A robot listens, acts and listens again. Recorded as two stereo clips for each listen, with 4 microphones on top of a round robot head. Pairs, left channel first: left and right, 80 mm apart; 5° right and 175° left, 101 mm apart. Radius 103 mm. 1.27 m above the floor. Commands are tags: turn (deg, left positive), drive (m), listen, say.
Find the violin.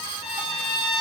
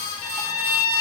<turn deg="-30"/>
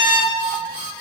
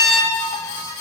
<turn deg="-20"/>
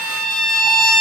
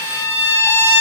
<say>Facing the violin, over 4 m away.</say>